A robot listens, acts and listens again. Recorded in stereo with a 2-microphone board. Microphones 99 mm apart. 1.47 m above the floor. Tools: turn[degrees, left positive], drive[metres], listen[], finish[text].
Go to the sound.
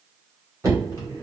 Thought: The knocking: about 35° right or 145° right.
Action: turn[-35]
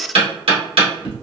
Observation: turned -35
Thought: So it is at 110° right.
Action: turn[-110]
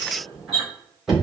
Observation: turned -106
Action: drive[1.0]
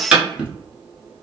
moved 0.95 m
Thought: The knocking is now 10° right.
Action: turn[-10]
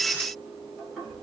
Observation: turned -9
Action: listen[]
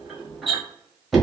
Action: drive[1.0]
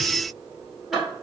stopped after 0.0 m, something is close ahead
Action: finish[I am next to the knocking.]